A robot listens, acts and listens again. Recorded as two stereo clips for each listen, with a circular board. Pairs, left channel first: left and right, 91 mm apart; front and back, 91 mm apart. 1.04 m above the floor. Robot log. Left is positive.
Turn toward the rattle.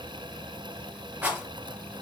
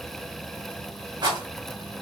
note: The rattle: 160° right.
cmd yaw -160
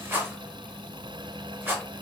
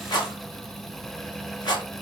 note: The rattle is now 30° right.
cmd yaw -30
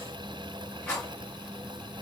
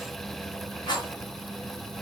note: The rattle is now 15° left.
cmd yaw +15
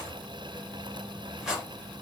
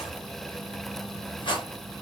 end: Found it: a rattle, straight ahead, under 1 m away.